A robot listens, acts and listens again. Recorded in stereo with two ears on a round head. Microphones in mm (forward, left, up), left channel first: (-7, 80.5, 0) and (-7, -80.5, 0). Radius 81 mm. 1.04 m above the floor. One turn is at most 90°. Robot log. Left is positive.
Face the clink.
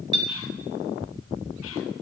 note: The clink: about 25° right or 155° right.
cmd yaw -25
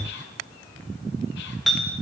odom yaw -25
end: Found it: a clink, straight ahead, under 1 m away.